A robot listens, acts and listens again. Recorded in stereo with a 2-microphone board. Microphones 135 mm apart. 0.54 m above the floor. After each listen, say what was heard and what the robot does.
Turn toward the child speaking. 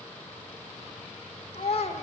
The child speaking: about 50° left or 130° left. Turn 50° left.
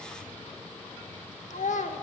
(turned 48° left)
So it is at 75° left. Turn 75° left.
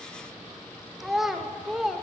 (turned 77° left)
Found it: a child speaking, straight ahead, 1 to 2 m away.